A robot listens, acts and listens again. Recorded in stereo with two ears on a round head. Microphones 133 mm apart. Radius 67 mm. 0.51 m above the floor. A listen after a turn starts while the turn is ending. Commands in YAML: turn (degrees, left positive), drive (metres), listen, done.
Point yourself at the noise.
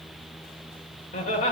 turn: 50
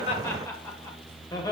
turn: 25
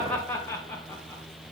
turn: 15
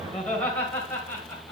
turn: 15
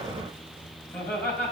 turn: 10
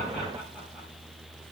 listen: true
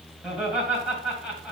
done: "Facing the laughter, 2 to 4 m away."